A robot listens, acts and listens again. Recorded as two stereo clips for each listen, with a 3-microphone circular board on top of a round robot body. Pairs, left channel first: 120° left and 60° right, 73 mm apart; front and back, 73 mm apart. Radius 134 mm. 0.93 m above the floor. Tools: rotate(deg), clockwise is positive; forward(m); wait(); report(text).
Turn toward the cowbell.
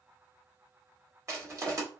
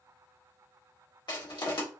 wait()
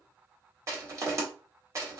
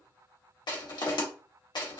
wait()
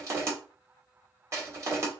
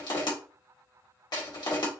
report("I can't make out a cowbell to turn to.")